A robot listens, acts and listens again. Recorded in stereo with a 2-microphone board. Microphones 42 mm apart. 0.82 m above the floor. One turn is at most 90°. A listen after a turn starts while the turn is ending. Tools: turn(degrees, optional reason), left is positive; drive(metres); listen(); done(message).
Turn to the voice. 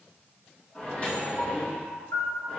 listen()
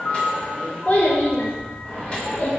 turn(degrees=35, reason="The child speaking: about 35° left or 145° left.")
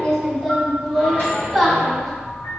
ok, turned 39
done("Facing the child speaking.")